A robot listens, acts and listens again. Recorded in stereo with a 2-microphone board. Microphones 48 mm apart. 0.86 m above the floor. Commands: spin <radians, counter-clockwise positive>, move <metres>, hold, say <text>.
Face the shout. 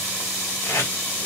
hold
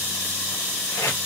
hold
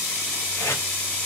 say I can't make out a shout to turn to.